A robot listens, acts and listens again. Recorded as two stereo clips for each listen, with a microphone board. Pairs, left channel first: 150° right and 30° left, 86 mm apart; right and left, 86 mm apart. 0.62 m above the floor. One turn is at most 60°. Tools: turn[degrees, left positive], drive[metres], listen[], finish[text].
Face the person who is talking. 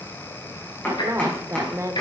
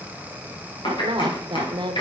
Thought: The woman speaking: 80° left.
Action: turn[60]
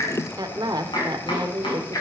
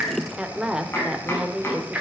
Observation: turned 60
Action: finish[Facing the woman speaking.]